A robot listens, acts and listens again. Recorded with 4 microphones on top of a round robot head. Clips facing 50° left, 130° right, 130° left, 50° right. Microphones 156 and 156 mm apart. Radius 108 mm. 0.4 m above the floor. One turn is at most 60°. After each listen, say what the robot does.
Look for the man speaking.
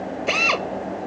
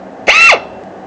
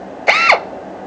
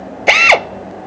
Keep listening.
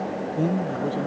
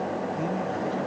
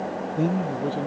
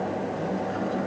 Turn 60° left.
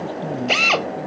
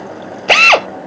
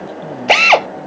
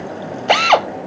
Turn 45° left.
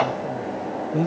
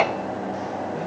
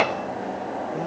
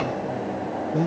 Turn 10° left.
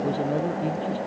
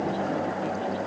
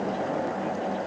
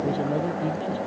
Keep listening.
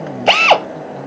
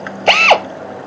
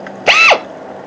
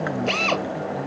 Keep listening.
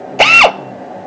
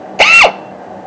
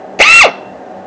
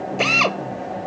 Facing where the man speaking came from. I can't hear it now.